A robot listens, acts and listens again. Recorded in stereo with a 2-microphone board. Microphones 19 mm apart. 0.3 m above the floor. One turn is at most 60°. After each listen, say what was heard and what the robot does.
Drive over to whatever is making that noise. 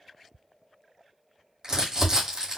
The crumpling: about 35° right or 145° right. Turn 35° right.
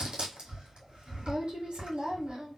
So it is at 105° right. Turn 60° right.
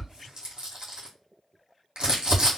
The crumpling is now 55° right. Turn 55° right.
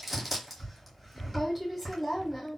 Drive 1.0 m forward.
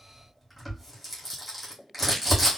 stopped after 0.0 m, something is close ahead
Blocked. The crumpling is further on, straight ahead.